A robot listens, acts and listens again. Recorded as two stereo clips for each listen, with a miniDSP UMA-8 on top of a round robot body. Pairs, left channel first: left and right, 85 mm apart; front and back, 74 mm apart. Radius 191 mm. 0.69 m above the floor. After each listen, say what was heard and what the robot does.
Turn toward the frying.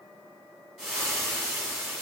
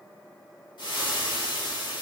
Found it: frying, straight ahead.